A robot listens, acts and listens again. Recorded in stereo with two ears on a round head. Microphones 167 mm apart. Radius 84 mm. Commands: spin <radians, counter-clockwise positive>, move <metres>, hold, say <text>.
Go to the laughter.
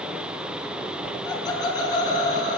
spin 0.44
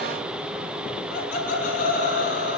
spin 2.27
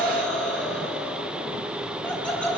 move 1.0
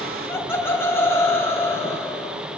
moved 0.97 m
spin 0.26
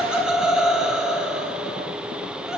move 1.0
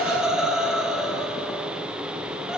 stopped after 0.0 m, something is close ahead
say Blocked. The laughter is further on, straight ahead.